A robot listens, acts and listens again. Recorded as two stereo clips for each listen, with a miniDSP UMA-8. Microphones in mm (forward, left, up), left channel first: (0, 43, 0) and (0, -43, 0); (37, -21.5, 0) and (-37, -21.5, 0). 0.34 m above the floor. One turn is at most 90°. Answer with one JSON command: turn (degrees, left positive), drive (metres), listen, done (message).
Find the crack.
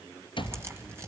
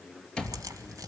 {"turn": -90}
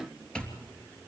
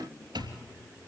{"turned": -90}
{"turn": -55}
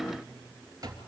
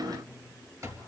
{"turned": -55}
{"done": "I heard a crack from this way, but can't make it out now."}